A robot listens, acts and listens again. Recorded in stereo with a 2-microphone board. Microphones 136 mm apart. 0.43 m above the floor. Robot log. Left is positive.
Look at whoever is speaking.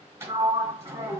cmd idle
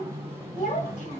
note: The child speaking: about 65° left or 115° left.
cmd yaw +65
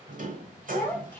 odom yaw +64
note: So it is at 15° left.
cmd yaw +15
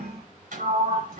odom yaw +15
cmd idle
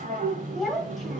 end: Facing the child speaking.